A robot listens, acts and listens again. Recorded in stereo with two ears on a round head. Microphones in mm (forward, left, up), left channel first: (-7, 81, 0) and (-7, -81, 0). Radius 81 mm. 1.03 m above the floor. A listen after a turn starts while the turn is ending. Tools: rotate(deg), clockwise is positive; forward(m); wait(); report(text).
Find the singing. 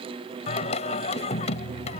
rotate(-35)
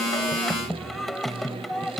report("Found it: singing, straight ahead.")